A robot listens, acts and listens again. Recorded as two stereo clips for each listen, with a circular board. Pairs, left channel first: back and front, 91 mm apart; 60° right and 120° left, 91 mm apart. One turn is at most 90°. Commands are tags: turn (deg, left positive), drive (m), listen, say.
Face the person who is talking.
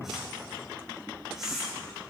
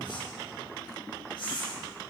<listen/>
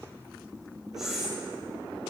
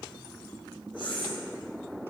<listen/>
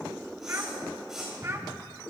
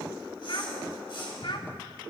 <turn deg="-55"/>
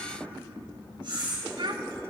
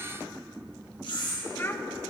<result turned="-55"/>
<say>Found it: a child speaking, straight ahead, under 1 m away.</say>